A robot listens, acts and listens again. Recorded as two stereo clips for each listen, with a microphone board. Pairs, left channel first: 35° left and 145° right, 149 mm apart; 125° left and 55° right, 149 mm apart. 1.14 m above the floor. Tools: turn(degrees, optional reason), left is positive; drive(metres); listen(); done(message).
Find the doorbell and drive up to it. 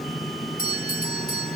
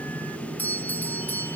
turn(degrees=45, reason="The doorbell: 45° left.")
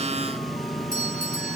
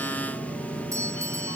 turn(degrees=15, reason="The doorbell is now 15° left.")
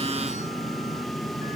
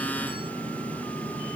listen()
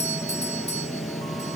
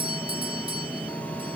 drive(metres=1.0)
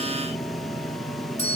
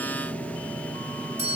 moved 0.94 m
turn(degrees=-10, reason="The doorbell is now 10° right.")
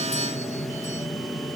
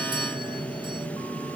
listen()
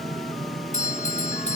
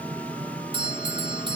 drive(metres=1.0)
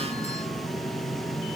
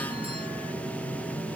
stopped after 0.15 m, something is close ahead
listen()
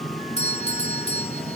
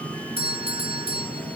done("Blocked. The doorbell is further on, straight ahead.")